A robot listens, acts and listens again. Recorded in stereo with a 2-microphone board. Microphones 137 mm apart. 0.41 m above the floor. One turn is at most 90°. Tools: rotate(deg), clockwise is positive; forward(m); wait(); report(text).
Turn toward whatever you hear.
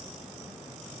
wait()
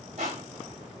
rotate(65)
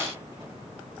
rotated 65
wait()
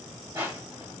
rotate(20)
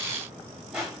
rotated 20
report("Found it: crushing, straight ahead.")